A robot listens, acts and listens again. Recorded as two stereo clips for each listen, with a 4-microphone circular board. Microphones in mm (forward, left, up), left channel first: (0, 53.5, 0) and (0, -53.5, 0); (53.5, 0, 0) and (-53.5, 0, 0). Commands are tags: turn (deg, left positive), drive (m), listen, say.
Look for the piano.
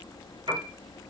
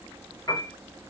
<turn deg="-55"/>
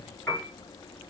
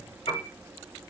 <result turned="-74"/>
<turn deg="20"/>
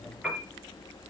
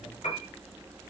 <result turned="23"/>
<say>Found it: a piano, straight ahead.</say>